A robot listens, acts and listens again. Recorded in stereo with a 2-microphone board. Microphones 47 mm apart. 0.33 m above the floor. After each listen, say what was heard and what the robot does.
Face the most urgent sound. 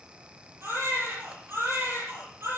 The baby crying: about 65° right or 115° right. Turn 65° right.
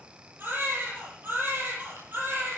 So it is at 45° right. Turn 45° right.
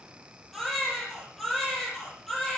Found it: a baby crying, straight ahead.